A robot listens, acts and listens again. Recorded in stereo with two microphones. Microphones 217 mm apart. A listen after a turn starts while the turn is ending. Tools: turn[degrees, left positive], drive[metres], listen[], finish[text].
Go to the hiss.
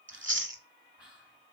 Action: listen[]
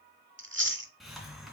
Action: turn[30]
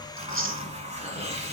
Thought: So it is at 30° right.
Action: turn[-30]
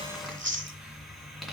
Action: drive[1.0]
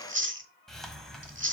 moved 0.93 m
Action: drive[1.0]
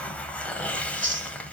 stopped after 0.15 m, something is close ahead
Action: finish[I am next to the hiss.]